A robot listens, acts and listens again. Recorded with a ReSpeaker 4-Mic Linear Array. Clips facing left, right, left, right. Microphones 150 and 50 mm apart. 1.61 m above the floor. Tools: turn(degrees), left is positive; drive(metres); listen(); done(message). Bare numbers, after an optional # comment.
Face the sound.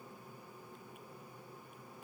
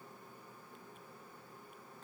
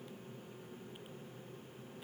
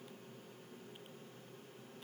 listen()
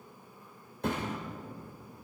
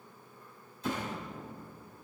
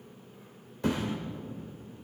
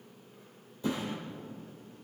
# The thud: about 65° left or 115° left.
turn(65)
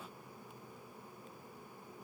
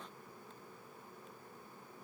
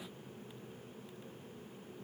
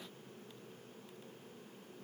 listen()
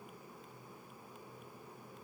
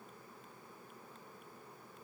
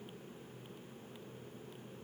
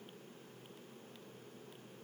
done("I heard a thud, but can't make it out now. It was about straight ahead or 50° left.")